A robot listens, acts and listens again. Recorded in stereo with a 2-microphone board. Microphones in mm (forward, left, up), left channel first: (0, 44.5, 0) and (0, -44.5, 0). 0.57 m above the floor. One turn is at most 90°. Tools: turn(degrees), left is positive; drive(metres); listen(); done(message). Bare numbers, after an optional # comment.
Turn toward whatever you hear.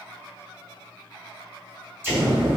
# The explosion: about 25° right or 155° right.
turn(-25)
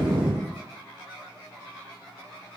# So it is at 130° right.
turn(-90)
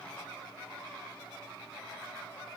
# Nothing new. It was at 40° right.
turn(-40)
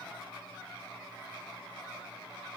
done("Facing where the explosion came from. I can't hear it now.")